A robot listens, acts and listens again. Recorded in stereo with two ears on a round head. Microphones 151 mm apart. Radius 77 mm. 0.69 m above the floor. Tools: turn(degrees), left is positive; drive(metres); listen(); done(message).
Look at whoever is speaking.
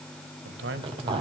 turn(degrees=-90)
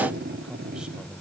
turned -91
done("Found it: a man speaking, straight ahead.")